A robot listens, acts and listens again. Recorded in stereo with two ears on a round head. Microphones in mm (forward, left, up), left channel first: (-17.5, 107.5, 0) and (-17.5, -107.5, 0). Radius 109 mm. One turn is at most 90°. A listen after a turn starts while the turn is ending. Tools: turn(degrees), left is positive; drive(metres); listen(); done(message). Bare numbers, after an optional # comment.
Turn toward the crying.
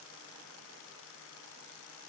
listen()
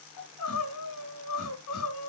turn(90)
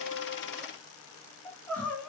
done("Facing the crying.")